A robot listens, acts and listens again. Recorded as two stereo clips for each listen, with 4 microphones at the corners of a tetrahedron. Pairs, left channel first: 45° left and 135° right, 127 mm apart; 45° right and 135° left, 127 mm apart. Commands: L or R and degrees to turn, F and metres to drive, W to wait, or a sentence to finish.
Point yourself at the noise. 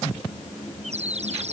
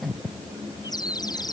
R105
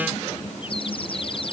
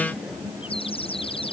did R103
Found it: a bird, straight ahead.